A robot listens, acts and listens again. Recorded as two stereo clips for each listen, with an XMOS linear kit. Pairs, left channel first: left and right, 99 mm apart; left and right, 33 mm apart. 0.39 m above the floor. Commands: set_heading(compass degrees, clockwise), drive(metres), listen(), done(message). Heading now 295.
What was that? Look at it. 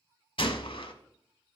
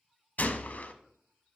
set_heading(230)
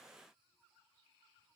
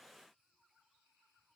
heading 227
listen()
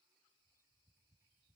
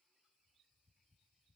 done("I heard a gunshot, but can't make it out now. It was about 5° right or 50° left.")